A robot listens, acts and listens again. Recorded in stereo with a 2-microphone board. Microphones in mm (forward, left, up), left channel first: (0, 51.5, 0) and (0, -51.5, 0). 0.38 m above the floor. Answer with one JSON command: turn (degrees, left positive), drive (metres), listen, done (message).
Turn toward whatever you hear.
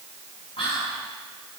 {"turn": 65}
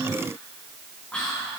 {"turn": 10}
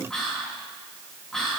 {"done": "Found it: whispering, straight ahead."}